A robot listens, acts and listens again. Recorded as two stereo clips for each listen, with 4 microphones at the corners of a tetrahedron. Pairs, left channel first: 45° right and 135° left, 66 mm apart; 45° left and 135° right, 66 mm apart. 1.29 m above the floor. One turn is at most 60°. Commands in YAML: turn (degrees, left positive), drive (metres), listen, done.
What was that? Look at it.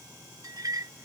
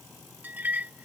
turn: 60
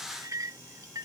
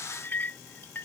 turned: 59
turn: 60
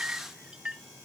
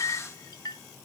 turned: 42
turn: 60
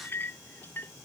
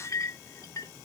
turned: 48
turn: 10
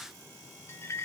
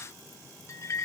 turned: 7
done: "Facing the clink."